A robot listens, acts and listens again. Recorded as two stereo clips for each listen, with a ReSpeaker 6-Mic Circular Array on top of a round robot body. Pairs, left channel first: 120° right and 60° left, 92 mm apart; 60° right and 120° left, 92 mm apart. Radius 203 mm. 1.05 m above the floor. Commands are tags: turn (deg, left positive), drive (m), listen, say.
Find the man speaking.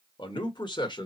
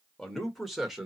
<turn deg="-155"/>
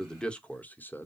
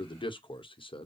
<turn deg="-55"/>
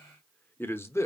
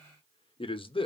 <turn deg="-65"/>
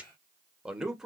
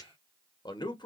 <turn deg="-25"/>
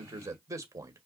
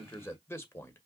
<say>Found it: a man speaking, straight ahead, 1 to 2 m away.</say>